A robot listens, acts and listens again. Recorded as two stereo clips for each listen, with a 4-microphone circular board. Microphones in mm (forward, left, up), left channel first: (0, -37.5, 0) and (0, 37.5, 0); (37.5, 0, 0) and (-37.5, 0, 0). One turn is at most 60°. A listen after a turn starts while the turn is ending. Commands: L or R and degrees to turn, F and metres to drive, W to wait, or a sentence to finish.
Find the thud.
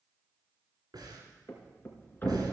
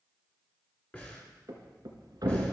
R60
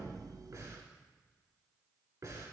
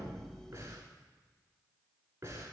R60
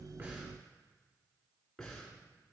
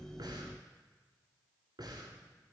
R30
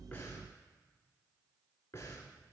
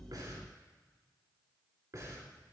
I heard a thud from this way, but can't make it out now.